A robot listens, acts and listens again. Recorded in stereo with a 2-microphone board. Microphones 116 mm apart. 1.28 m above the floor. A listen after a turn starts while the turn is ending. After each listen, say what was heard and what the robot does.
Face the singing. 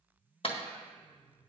The singing: about 15° left or 165° left. Turn 15° left.
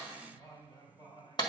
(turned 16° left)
So it is at 140° left. Turn 140° left.
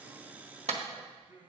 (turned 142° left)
The singing is now 20° right. Turn 20° right.
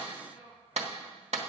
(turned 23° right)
Facing the singing, 2 to 4 m away.